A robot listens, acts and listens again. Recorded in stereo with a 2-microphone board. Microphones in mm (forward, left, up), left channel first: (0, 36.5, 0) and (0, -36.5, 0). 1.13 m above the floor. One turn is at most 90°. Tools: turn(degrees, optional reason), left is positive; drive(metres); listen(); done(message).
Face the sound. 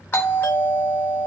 turn(degrees=30, reason="The doorbell: about 30° left or 150° left.")
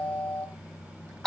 done("Found it: a doorbell, straight ahead, 1 to 2 m away.")